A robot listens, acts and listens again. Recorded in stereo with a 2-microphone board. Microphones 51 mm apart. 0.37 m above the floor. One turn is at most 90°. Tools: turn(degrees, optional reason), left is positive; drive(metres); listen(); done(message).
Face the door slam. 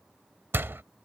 turn(degrees=-45, reason="The door slam: about 45° right or 135° right.")
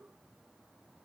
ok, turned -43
listen()
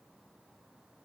done("I heard a door slam, but can't make it out now. It was about 5° right or 90° right.")